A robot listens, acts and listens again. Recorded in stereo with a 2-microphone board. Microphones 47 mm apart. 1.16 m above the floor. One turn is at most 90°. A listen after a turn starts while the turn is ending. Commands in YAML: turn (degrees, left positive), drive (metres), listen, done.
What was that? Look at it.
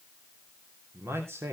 turn: -70
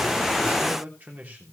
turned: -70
turn: -40
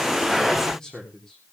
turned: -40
turn: 15
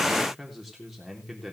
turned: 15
done: "Facing the man speaking, 2 to 4 m away."